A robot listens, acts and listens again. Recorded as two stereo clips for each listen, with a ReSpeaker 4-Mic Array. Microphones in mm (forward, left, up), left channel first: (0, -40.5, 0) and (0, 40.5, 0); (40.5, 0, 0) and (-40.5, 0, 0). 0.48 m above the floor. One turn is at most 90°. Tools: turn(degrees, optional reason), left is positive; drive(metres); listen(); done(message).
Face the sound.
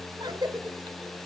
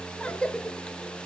turn(degrees=75, reason="The cough: 75° left.")
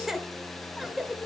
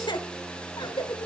done("Found it: a cough, straight ahead, 1 to 2 m away.")